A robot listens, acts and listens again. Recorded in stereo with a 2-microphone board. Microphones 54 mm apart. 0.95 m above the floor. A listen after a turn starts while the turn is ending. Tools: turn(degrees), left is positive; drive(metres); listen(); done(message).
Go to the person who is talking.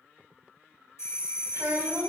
turn(degrees=-65)
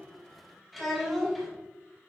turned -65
drive(metres=1.0)
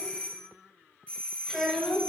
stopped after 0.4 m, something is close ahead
done("Blocked. The child speaking is further on, straight ahead.")